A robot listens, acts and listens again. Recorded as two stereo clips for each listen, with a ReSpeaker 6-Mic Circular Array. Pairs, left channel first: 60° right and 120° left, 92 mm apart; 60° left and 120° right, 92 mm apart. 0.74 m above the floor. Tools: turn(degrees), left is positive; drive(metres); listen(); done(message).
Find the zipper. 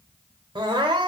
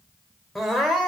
listen()
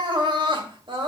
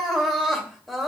listen()
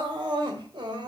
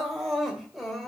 done("I can't make out a zipper, only crying.")